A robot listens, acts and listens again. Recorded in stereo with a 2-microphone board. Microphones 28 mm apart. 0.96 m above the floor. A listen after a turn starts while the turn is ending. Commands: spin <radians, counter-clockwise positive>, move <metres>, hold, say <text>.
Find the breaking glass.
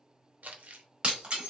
spin -0.61
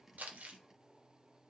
hold
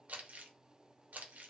say I heard breaking glass, but can't make it out now. It was about straight ahead or 110° right.